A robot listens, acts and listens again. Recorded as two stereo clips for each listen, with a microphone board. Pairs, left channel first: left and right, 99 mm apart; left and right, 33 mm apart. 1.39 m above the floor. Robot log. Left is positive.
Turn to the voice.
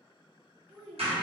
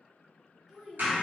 note: The child speaking: about 20° right or 160° right.
cmd yaw -20
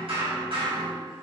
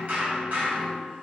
cmd idle
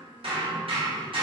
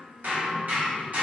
cmd idle
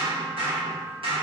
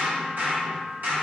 end: I heard a child speaking, but can't make it out now. It was about straight ahead or 140° right.